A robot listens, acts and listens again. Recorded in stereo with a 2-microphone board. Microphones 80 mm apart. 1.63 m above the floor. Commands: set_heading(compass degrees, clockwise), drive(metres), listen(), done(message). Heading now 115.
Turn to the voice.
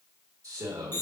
set_heading(160)
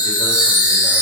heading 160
listen()
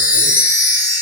listen()
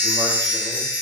done("I heard a man speaking, but can't make it out now. It was about straight ahead or 90° right.")